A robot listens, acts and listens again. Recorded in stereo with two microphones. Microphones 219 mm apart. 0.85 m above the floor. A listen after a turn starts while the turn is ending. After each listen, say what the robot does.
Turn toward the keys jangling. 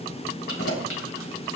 Turn 90° left.
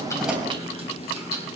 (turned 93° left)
Turn 30° right.
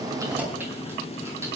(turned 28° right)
Keep listening.
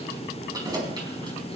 Turn 20° right.
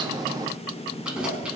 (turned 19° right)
Facing the keys jangling, over 4 m away.